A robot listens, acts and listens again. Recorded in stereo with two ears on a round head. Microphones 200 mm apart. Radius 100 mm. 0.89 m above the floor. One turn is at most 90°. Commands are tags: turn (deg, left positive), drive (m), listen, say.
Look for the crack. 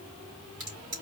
<turn deg="-55"/>
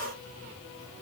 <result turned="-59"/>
<listen/>
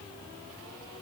<say>I heard a crack, but can't make it out now. It was about straight ahead or 65° right.</say>